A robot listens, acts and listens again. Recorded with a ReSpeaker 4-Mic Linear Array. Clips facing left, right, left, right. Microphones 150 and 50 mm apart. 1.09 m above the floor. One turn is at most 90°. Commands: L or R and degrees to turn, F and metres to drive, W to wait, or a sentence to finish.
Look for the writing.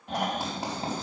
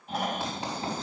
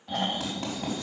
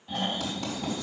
L35
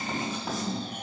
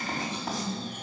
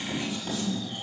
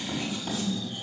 Found it: writing, straight ahead, over 4 m away.